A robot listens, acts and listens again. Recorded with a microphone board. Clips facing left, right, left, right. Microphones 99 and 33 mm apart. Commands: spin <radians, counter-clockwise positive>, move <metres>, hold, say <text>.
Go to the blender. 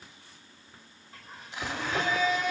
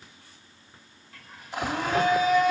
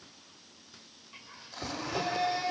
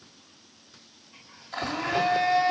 spin -0.79
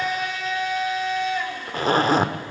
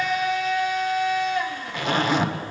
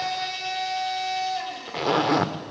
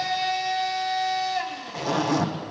move 1.0
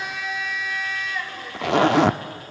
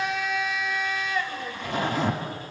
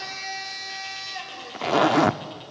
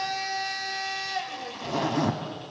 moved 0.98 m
move 1.0
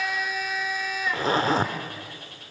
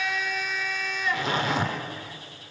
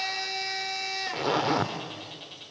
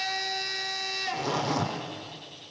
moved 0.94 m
move 1.0
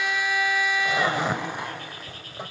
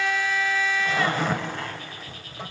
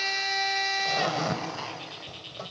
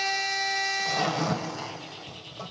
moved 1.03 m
spin 0.35
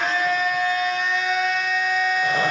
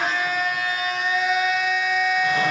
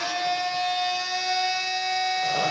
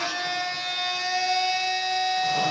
move 1.0
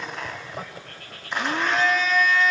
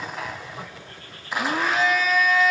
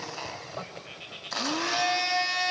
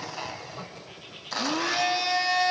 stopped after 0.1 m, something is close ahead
say Arrived at the blender, straight ahead.